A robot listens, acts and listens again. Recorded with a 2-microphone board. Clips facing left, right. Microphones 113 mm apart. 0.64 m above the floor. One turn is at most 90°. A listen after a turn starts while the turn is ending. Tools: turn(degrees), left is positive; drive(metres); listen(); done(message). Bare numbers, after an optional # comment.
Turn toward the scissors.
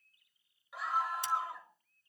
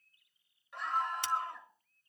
# The scissors: about 70° right or 110° right.
turn(-70)
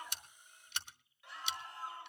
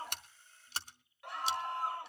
# So it is at 35° right.
turn(-35)
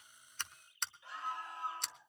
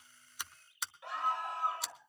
done("Found it: scissors, straight ahead.")